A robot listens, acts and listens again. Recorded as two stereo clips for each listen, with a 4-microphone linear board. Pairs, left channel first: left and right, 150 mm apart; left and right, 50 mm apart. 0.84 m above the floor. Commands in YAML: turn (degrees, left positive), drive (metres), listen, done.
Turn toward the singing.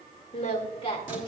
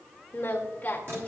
turn: 35
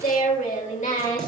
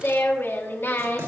turn: 125
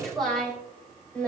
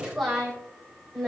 done: "Facing the singing."